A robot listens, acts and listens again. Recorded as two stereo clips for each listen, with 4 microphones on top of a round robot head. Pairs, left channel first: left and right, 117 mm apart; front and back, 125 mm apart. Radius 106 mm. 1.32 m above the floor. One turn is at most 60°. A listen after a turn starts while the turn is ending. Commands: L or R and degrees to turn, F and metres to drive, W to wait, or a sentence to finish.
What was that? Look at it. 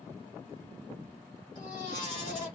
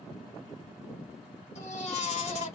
L30
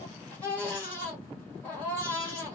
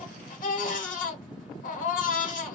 L10
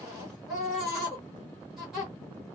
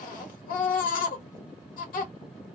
Facing the baby crying.